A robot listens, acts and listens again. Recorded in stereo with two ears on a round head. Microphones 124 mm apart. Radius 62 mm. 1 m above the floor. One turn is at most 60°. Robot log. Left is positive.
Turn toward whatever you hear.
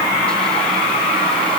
cmd idle
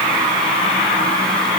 cmd idle
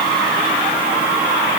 end: I can't make out anything.